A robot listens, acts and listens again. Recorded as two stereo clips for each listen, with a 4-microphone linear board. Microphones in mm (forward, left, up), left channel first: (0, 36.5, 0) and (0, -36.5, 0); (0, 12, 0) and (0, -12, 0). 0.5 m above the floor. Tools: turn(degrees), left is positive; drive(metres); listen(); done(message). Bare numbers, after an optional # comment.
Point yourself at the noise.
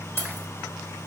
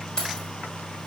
# The keys jangling: about 35° left or 145° left.
turn(35)
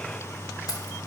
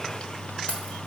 listen()
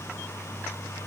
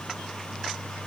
listen()
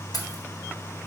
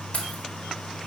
# So it is at 110° left.
turn(110)
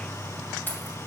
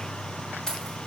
# The keys jangling is now 30° left.
turn(30)
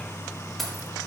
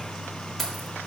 done("Facing the keys jangling.")